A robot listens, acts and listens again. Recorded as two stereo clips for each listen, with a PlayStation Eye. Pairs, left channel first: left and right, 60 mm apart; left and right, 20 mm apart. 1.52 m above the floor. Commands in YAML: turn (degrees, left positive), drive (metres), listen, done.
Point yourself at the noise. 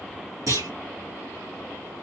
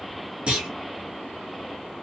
turn: -90
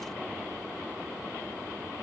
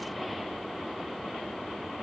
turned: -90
done: "Facing where the clunk came from. I can't hear it now."